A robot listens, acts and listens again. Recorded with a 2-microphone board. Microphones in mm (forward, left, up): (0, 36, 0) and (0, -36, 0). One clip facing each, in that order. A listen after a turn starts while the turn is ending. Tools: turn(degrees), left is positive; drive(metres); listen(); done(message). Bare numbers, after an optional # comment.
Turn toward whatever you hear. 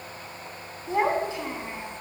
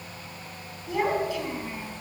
# The child speaking: about 20° left or 160° left.
turn(20)
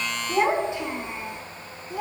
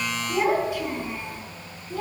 turn(30)
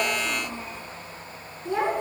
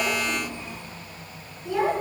# The child speaking: about 30° left or 150° left.
turn(30)
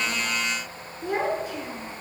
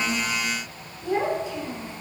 # So it is at 130° left.
turn(130)
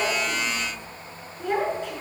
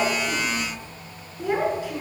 done("Facing the child speaking.")